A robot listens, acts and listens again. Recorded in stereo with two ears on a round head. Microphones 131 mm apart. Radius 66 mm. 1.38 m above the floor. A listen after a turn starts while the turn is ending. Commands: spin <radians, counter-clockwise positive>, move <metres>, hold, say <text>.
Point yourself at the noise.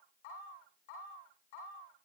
hold
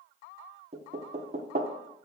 spin -0.87
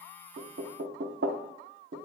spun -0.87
spin -1.40
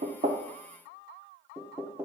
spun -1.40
spin -0.26
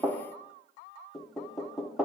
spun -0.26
say Found it: knocking, straight ahead, under 1 m away.